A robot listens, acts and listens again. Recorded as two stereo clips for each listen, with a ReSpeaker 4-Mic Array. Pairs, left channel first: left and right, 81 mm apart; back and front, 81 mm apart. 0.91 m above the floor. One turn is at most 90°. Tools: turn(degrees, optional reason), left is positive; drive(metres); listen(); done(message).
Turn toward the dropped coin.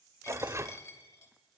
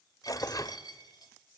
turn(degrees=90, reason="The dropped coin: 140° left.")
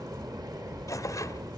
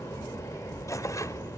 turn(degrees=50, reason="Nothing new. It was at 50° left.")
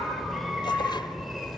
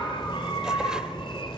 done("Facing where the dropped coin came from. I can't hear it now.")